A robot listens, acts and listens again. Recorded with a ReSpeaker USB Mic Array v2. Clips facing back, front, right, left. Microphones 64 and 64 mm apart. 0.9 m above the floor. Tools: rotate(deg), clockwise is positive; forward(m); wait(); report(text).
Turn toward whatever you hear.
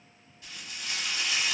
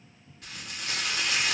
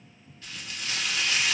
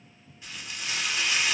rotate(-20)
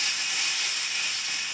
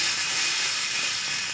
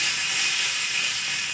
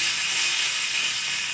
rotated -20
report("Found it: frying, straight ahead.")